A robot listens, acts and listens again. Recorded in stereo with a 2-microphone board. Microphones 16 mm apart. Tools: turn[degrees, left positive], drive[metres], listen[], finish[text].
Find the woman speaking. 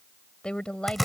Action: turn[90]
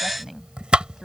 Action: finish[Found it: a woman speaking, straight ahead.]